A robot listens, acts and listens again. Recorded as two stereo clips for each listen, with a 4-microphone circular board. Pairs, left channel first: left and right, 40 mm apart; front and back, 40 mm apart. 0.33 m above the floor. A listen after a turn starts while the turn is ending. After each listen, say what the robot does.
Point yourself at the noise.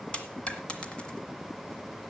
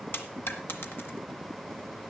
Turn 25° left.
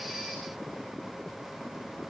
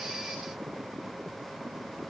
I heard a dropped coin from this way, but can't make it out now.